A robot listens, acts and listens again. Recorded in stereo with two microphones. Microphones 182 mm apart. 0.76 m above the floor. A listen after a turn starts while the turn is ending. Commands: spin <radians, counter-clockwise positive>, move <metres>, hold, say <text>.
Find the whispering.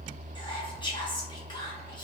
spin 0.44
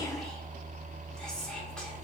say Found it: whispering, straight ahead, under 1 m away.